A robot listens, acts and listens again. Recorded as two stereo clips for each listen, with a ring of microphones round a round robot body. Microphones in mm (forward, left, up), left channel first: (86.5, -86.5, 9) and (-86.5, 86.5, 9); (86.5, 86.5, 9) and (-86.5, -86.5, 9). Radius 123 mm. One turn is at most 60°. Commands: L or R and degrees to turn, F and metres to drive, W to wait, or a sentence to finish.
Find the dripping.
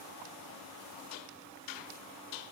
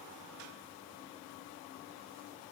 W
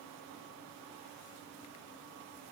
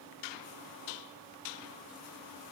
W
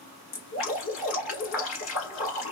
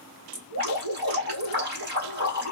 R60
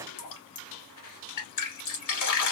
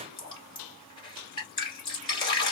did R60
R25
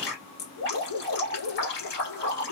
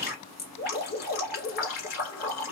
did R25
Facing the dripping, 1 to 2 m away.